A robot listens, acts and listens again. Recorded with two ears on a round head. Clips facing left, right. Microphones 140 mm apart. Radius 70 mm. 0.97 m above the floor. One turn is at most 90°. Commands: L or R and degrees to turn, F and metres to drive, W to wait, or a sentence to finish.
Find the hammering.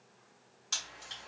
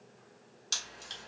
W
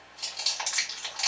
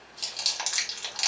W
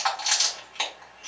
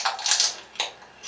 I can't make out hammering to turn to.